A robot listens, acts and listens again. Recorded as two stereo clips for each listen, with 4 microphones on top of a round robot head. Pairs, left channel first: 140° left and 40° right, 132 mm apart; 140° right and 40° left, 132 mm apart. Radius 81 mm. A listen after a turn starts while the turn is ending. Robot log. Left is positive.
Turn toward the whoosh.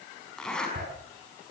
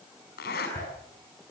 note: The whoosh: 90° right.
cmd yaw -90
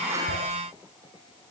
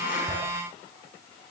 cmd idle
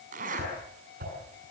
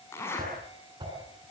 note: The whoosh is now 20° right.
cmd yaw -20
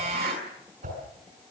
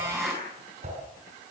end: Facing the whoosh.